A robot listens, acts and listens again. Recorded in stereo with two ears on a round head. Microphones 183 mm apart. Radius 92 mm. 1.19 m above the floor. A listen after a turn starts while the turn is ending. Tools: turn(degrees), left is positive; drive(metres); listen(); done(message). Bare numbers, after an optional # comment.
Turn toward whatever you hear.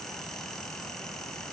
listen()
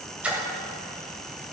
turn(-30)
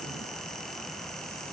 listen()
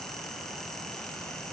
done("I heard a splash, but can't make it out now. It was about 25° left or 145° right.")